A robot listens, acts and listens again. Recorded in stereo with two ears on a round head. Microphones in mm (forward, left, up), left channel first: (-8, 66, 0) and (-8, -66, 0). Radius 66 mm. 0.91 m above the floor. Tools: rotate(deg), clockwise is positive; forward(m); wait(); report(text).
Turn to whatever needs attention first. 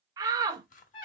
rotate(25)
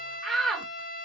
report("Facing the shout, under 1 m away.")